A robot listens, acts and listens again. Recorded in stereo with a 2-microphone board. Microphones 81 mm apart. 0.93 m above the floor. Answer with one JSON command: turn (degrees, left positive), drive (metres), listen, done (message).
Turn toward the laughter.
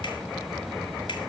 {"listen": true}
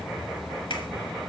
{"listen": true}
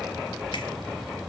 {"done": "I can't make out laughter to turn to."}